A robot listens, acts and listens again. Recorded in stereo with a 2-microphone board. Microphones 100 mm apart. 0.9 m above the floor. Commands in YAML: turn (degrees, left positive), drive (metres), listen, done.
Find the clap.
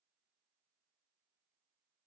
listen: true
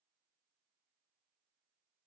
listen: true
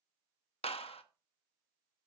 turn: 90
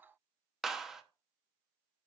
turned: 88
done: "Facing the clap, under 1 m away."